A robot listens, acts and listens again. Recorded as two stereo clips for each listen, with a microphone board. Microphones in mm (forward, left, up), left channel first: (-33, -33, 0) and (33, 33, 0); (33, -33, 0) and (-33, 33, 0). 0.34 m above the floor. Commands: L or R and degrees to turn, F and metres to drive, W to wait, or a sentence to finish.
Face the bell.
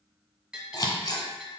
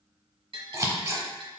L125
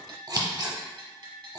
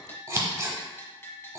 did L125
L15
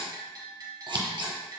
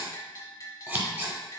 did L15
Found it: a bell, straight ahead.